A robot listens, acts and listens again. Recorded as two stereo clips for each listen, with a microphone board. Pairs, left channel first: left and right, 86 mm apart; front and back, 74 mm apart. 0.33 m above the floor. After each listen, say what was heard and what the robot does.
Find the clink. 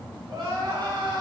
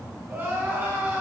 Keep listening.
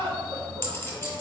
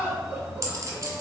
The clink: 150° left. Turn 150° left.
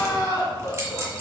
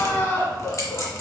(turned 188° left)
The clink is now 35° right. Turn 35° right.
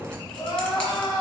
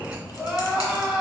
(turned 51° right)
Nothing new. It was at 15° left. Turn 15° left.
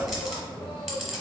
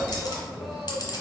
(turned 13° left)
Facing the clink.